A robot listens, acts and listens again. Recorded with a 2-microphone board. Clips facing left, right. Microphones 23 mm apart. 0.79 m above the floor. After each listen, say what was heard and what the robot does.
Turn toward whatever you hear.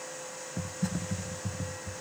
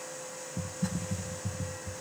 The typing on a keyboard: about 55° left or 125° left. Turn 55° left.
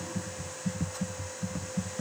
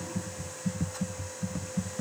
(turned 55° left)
Facing the typing on a keyboard.